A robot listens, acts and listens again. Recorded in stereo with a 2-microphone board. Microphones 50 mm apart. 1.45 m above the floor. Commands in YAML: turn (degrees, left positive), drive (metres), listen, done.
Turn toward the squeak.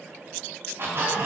turn: -55
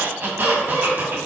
turn: -55
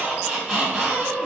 turn: -25
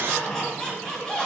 turn: 15
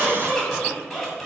done: "Found it: a squeak, straight ahead."